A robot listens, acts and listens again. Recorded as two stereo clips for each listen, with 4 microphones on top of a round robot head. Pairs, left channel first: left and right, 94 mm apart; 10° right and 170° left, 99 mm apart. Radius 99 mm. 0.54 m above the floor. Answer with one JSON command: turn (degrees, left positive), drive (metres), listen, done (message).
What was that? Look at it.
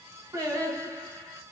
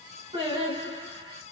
{"turn": -145}
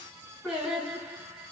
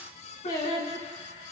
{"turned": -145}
{"done": "Facing the singing, over 4 m away."}